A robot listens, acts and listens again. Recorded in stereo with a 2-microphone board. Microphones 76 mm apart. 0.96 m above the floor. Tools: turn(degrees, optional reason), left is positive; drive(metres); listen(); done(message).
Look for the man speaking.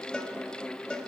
listen()
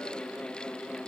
listen()
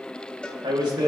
turn(degrees=-90)
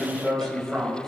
done("Found it: a man speaking, straight ahead.")